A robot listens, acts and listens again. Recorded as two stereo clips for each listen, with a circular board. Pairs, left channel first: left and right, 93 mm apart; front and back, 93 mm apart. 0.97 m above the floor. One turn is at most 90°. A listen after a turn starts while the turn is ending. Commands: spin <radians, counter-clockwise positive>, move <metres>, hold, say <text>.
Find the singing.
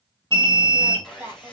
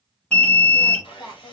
spin -0.44
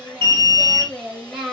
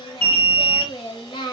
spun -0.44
say Found it: singing, straight ahead.